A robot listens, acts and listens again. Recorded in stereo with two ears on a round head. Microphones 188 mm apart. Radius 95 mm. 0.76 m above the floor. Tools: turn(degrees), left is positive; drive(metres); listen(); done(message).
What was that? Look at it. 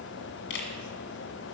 turn(degrees=60)
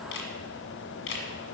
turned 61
turn(degrees=60)
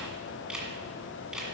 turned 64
done("Facing the camera shutter.")